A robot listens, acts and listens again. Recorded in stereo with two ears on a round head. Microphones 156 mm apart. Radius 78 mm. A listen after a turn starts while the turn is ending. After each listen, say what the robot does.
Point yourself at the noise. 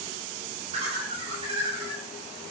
Turn 30° right.
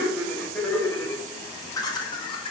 Turn 30° left.
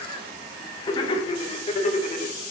Turn 45° left.
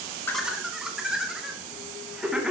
Facing the laughter, 1 to 2 m away.